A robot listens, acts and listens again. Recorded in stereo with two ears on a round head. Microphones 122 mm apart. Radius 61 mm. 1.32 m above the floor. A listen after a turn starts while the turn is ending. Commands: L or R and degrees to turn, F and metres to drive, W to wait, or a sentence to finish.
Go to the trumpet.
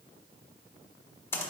W
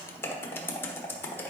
W
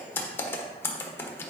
I can't make out a trumpet, only typing on a keyboard.